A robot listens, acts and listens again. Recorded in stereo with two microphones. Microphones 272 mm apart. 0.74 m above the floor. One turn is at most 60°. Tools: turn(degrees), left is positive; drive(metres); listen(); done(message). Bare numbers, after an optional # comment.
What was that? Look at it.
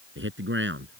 # The man speaking: about 45° right or 135° right.
turn(-45)
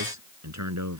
# So it is at 95° right.
turn(-60)
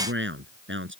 # The man speaking is now 45° right.
turn(-45)
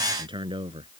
# The man speaking is now 20° right.
turn(-20)
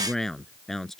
done("Found it: a man speaking, straight ahead.")